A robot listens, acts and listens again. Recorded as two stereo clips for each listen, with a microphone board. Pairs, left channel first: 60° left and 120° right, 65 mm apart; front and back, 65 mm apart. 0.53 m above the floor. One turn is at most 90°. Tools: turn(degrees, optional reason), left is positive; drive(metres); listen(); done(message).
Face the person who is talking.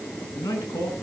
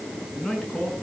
turn(degrees=75, reason="The man speaking: 75° left.")
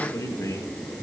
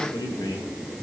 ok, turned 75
turn(degrees=15, reason="The man speaking is now 15° left.")
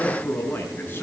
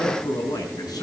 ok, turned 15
done("Found it: a man speaking, straight ahead, over 4 m away.")